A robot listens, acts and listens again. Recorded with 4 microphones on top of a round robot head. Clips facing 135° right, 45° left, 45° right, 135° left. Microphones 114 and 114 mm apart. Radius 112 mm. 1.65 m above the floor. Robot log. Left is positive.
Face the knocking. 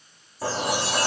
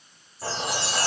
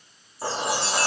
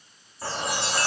cmd idle
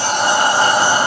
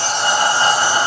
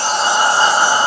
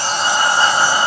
cmd idle
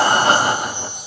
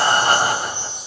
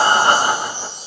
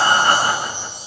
end: I can't make out knocking, only a chime and breathing.